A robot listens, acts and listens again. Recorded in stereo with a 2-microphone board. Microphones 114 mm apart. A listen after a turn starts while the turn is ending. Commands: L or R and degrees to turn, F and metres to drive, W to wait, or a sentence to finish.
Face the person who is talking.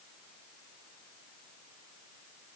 W
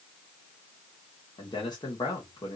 L40
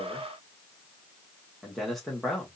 Facing the man speaking, 2 to 4 m away.